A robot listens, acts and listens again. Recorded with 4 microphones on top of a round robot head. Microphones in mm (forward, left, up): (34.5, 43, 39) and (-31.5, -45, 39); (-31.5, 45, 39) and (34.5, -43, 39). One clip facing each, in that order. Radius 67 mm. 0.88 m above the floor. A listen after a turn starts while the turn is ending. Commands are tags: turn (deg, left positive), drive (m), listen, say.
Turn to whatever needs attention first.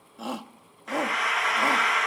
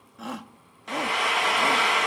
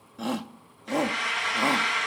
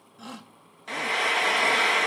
<turn deg="115"/>
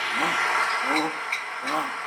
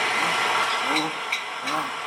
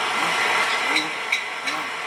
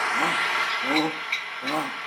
<turn deg="-20"/>
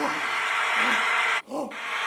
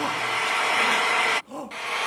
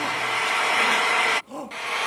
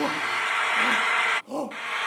<say>Found it: a shout, straight ahead.</say>